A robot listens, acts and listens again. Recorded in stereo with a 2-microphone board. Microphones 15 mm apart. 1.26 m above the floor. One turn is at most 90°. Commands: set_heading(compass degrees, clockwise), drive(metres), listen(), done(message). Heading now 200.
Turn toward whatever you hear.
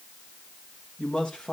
set_heading(110)
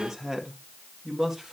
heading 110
set_heading(140)
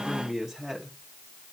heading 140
set_heading(160)
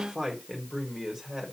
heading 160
set_heading(175)
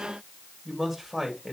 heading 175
done("Found it: a man speaking, straight ahead.")